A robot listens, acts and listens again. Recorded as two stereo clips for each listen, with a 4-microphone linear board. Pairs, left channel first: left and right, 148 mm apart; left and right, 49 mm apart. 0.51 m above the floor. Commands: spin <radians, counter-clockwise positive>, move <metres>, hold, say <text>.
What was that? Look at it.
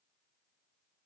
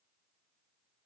hold
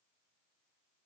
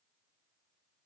hold
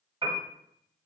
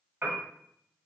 spin -0.70
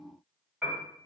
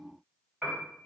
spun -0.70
say Found it: a piano, straight ahead.